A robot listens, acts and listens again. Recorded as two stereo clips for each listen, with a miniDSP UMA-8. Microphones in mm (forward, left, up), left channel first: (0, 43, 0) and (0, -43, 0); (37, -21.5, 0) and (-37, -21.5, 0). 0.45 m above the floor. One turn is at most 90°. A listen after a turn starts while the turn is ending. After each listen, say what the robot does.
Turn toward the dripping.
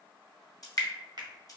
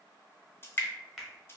Turn 55° left.
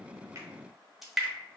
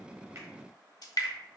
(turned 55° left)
Found it: dripping, straight ahead.